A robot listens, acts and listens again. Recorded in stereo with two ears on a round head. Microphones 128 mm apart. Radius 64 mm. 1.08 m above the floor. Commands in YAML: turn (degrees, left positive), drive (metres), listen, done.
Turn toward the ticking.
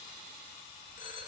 listen: true
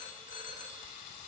listen: true
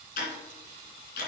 turn: 70
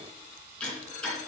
turn: 10
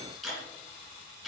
done: "Facing the ticking, 2 to 4 m away."